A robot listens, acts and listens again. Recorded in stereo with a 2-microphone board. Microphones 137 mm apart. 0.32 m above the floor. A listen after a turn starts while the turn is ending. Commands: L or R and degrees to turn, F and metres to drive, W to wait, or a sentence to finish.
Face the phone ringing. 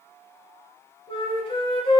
W
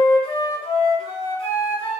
W
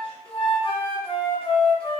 I can't make out a phone ringing, only a flute.